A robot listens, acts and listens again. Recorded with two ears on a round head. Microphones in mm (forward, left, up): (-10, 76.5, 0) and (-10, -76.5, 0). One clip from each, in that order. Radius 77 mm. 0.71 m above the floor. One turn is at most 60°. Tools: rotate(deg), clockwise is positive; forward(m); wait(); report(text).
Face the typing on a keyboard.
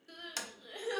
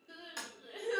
wait()
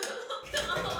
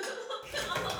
rotate(60)
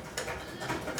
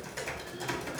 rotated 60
rotate(45)
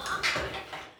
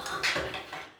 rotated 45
report("Found it: typing on a keyboard, straight ahead.")